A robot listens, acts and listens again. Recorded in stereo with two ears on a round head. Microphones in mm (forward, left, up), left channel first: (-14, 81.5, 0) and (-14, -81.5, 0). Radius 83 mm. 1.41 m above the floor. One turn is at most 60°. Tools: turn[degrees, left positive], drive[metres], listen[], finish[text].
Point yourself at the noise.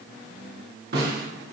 Thought: The snare drum: about 55° right or 125° right.
Action: turn[-55]
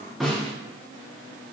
Action: finish[Facing the snare drum, 2 to 4 m away.]